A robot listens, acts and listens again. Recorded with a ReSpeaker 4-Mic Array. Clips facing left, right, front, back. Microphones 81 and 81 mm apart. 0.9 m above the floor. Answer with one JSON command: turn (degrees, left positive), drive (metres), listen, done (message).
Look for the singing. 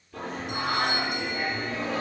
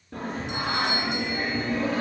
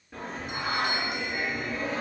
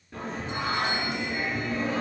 {"turn": -85}
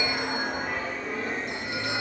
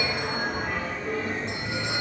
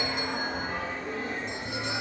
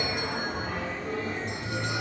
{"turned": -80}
{"done": "Facing the singing."}